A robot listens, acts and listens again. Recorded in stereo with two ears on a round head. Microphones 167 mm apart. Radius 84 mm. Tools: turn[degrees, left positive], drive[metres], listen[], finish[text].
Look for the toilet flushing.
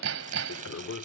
Thought: The toilet flushing: about 75° left or 105° left.
Action: turn[75]
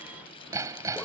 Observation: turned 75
Action: listen[]
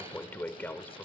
Thought: So it is at 10° left.
Action: turn[10]
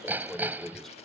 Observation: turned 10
Action: finish[Facing the toilet flushing.]